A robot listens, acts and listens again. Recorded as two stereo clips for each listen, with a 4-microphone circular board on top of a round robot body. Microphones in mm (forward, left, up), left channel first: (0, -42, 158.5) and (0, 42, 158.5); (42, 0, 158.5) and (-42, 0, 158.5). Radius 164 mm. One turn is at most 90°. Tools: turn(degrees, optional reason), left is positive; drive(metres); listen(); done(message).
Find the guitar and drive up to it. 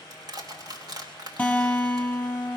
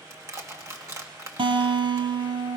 turn(degrees=-90, reason="The guitar: 165° right.")
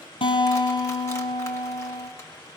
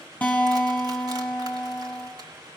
turn(degrees=-75, reason="The guitar is now 75° right.")
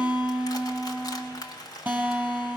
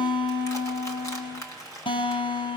turn(degrees=15, reason="The guitar is now 15° left.")
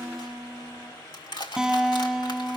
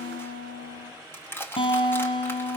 drive(metres=1.0)
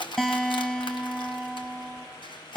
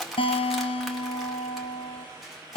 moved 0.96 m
drive(metres=1.0)
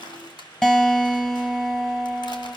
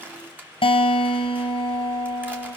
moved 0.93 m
turn(degrees=-10, reason="The guitar is now 10° right.")
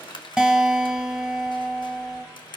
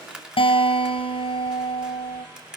drive(metres=1.0)
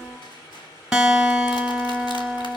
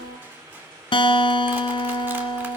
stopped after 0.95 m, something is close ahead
done("Arrived at the guitar, straight ahead.")